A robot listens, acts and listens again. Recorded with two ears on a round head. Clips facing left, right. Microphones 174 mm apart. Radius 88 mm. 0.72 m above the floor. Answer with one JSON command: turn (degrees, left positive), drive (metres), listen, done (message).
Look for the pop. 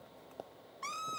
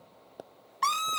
{"turn": -15}
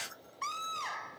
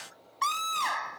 {"listen": true}
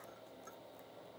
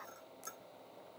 {"done": "I heard a pop, but can't make it out now. It was about straight ahead or 150° right."}